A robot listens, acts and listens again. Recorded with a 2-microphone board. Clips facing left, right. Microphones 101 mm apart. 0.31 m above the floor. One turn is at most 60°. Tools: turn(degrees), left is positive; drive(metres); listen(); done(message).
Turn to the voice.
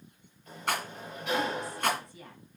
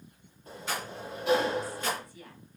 turn(degrees=25)
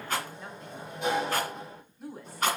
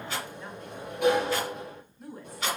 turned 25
done("Facing the woman speaking, 1 to 2 m away.")